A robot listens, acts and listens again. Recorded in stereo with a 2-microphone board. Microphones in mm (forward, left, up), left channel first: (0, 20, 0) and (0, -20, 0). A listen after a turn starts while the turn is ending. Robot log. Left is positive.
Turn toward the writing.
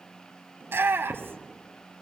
note: The writing: about 70° right or 110° right.
cmd yaw -70
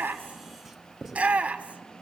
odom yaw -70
end: Found it: writing, straight ahead.